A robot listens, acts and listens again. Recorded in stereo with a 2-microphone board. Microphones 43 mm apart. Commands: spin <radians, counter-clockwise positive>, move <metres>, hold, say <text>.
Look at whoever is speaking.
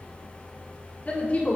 spin 0.61
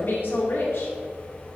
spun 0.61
spin 1.83
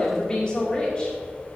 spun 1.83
spin 0.44
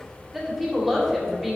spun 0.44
say Facing the woman speaking, 2 to 4 m away.